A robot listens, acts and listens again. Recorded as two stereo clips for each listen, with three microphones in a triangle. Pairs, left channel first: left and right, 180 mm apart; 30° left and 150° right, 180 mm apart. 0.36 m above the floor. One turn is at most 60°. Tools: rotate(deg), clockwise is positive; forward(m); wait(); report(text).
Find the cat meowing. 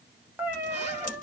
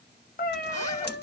rotate(10)
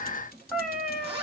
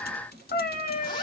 report("Found it: a cat meowing, straight ahead, under 1 m away.")